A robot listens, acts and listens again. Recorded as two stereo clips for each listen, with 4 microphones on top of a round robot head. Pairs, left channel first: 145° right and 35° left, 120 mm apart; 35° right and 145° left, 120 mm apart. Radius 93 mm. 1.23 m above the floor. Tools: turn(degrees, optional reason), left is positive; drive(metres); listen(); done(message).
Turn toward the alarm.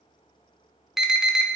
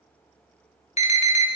turn(degrees=-50, reason="The alarm: 50° right.")
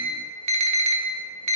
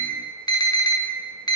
turn(degrees=20, reason="The alarm is now 20° left.")
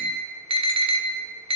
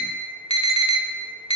done("Found it: an alarm, straight ahead.")